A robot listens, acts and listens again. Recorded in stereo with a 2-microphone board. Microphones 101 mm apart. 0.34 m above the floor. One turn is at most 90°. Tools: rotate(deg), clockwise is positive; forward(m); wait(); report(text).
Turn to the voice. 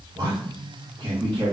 rotate(55)
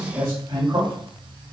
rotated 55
rotate(30)
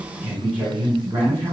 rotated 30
rotate(25)
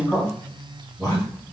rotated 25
rotate(-15)
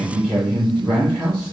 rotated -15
report("Found it: a man speaking, straight ahead, 2 to 4 m away.")